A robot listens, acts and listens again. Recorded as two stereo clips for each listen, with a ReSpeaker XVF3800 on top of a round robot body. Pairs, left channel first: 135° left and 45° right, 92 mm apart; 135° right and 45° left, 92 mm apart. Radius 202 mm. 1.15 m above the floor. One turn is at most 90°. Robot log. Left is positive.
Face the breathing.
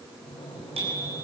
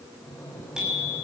note: The breathing: 160° left.
cmd yaw +90
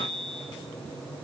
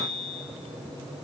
note: The breathing is now 50° left.
cmd yaw +50
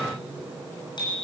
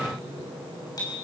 note: The breathing is now 15° left.
cmd yaw +15
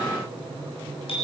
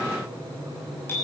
end: Facing the breathing.